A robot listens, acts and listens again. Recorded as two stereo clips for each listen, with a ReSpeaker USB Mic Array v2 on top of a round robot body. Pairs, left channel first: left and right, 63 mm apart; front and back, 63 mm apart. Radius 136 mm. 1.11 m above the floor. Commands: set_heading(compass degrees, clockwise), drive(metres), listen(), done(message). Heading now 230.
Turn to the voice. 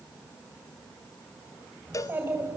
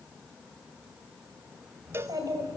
set_heading(20)
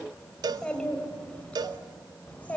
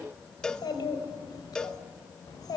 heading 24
set_heading(4)
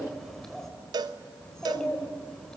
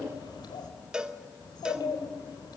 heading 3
done("Found it: a child speaking, straight ahead.")